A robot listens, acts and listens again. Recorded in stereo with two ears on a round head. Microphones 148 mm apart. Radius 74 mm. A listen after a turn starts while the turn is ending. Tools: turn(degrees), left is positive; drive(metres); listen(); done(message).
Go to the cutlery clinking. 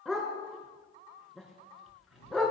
turn(degrees=90)
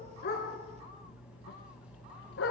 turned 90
turn(degrees=-10)
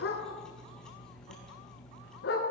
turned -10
drive(metres=1.0)
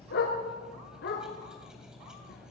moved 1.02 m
drive(metres=1.0)
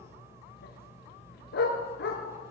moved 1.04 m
turn(degrees=-15)
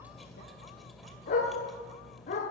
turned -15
drive(metres=1.0)
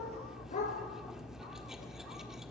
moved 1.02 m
drive(metres=1.0)
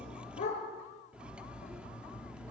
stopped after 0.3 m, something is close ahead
done("Arrived at the cutlery clinking, straight ahead.")